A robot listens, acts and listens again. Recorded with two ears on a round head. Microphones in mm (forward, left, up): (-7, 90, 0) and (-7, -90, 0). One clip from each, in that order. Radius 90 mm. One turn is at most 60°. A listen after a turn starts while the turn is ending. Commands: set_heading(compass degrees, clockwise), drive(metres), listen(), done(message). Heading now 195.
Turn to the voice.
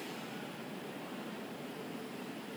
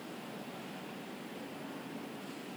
listen()
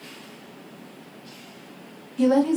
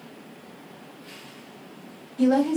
set_heading(150)
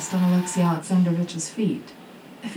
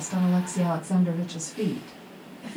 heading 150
set_heading(90)
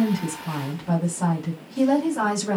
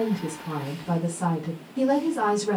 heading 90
set_heading(75)
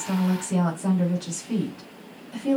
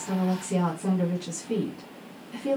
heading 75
done("Facing the woman speaking, 1 to 2 m away.")